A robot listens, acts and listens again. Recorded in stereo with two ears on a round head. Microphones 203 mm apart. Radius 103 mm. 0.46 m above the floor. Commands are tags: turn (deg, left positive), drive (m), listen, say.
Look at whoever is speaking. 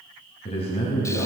<turn deg="25"/>
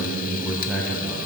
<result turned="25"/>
<say>Found it: a man speaking, straight ahead.</say>